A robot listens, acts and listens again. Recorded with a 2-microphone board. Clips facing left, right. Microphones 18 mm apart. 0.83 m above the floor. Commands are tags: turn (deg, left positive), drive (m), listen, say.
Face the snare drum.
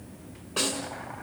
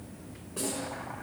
<turn deg="90"/>
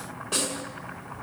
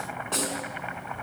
<turn deg="10"/>
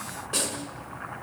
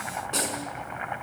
<say>Found it: a snare drum, straight ahead.</say>